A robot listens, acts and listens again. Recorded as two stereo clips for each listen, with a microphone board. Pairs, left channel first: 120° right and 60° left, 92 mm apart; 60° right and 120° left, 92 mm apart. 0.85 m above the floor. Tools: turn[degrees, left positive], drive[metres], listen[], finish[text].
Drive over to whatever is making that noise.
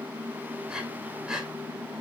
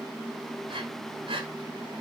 Thought: The breathing: 140° left.
Action: turn[140]
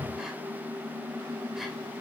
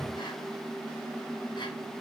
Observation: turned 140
Action: listen[]
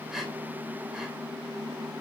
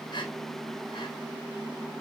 Action: listen[]
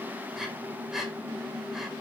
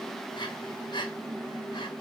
Thought: The breathing is now 25° right.
Action: turn[-25]
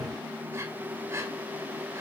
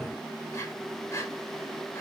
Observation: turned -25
Action: drive[1.0]
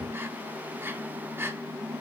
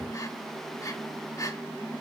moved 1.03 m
Action: drive[1.0]
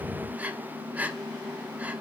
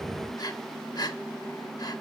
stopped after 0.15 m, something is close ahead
Thought: The breathing is now 15° right.
Action: turn[-15]
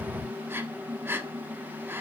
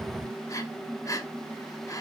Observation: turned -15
Action: finish[I am next to the breathing.]